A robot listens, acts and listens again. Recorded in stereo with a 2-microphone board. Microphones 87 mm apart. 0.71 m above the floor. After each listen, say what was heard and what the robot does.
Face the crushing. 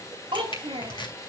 The crushing: about 65° left or 115° left. Turn 65° left.
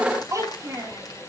Keep listening.
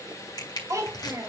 So it is at 50° left. Turn 50° left.
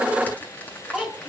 Keep listening.
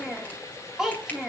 Keep listening.
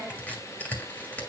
The crushing is now 15° left. Turn 15° left.
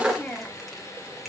Keep listening.
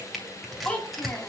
Found it: crushing, straight ahead.